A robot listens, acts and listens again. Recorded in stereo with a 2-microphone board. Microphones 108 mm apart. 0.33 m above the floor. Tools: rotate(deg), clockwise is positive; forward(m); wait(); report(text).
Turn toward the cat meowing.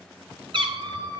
rotate(45)
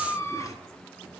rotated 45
rotate(-30)
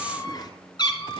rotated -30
rotate(-50)
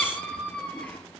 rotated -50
rotate(-15)
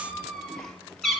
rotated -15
report("Facing the cat meowing, 2 to 4 m away.")